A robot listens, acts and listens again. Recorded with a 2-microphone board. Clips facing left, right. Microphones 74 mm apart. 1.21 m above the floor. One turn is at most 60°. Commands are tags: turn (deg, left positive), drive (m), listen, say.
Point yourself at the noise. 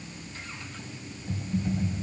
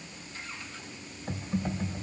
<turn deg="-45"/>
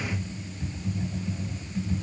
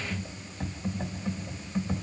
<turn deg="-60"/>
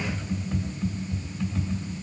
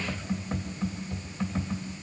<turn deg="-55"/>
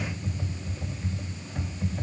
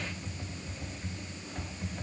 <say>Found it: typing on a keyboard, straight ahead.</say>